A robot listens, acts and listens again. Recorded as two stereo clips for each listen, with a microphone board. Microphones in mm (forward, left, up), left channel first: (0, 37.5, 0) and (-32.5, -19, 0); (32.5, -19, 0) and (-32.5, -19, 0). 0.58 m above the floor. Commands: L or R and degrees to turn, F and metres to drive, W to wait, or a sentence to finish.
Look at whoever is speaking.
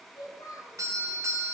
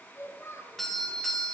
L50
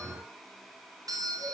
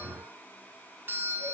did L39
L10
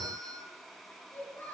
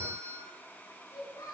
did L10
Found it: a child speaking, straight ahead, over 4 m away.